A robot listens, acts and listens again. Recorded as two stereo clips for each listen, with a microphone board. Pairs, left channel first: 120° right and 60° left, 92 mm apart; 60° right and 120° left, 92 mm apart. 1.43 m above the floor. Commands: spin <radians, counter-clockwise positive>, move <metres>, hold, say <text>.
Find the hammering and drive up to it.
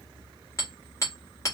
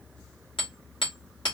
spin -1.13
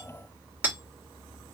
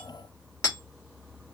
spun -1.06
move 1.0
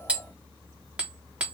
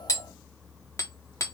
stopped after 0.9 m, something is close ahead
spin -0.26
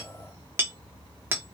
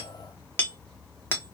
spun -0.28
say Arrived at the hammering, straight ahead.